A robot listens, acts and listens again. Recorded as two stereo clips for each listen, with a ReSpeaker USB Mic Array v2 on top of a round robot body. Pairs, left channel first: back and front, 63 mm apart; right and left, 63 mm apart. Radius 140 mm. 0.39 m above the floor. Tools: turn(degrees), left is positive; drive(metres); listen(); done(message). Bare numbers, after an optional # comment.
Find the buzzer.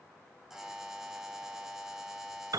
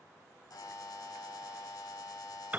# The buzzer: 80° right.
turn(-80)
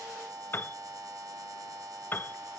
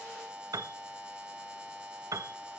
# The buzzer is now 15° left.
turn(15)
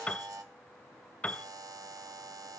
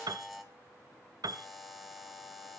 done("Found it: a buzzer, straight ahead, 2 to 4 m away.")